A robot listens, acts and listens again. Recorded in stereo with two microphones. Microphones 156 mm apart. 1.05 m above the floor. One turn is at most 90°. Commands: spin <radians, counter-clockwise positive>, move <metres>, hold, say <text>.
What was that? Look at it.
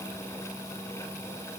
hold
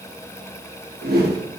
spin -1.57
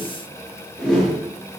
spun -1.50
say Found it: a whoosh, straight ahead, under 1 m away.